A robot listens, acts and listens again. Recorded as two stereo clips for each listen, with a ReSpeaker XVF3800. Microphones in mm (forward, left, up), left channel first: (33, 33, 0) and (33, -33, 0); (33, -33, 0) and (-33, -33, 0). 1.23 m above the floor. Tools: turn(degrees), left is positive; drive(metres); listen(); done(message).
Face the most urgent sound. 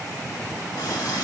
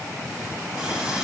listen()
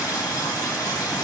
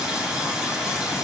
listen()
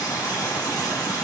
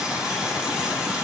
done("I can't make out anything urgent to turn to.")